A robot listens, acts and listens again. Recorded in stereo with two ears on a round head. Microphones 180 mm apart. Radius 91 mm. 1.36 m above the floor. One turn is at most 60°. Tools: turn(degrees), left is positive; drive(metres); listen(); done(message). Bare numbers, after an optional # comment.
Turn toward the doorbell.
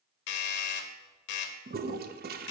# The doorbell: about 55° left or 125° left.
turn(55)
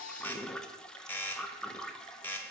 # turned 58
# So it is at 10° left.
turn(10)
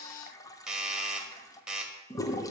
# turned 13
done("Found it: a doorbell, straight ahead, under 1 m away.")